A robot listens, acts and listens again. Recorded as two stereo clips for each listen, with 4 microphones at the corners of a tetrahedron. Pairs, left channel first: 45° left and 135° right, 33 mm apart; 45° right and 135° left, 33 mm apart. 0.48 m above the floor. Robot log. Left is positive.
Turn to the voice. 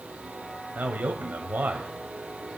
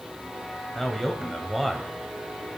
note: The man speaking: 140° right.
cmd yaw -140
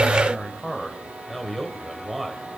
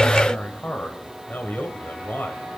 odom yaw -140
note: The man speaking is now 45° right.
cmd yaw -45
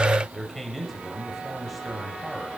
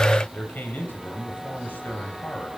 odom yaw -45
note: The man speaking is now 40° right.
cmd yaw -40
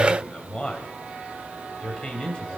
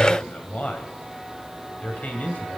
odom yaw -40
note: The man speaking is now 10° right.
cmd yaw -10
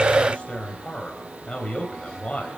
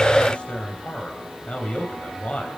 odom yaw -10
end: Facing the man speaking.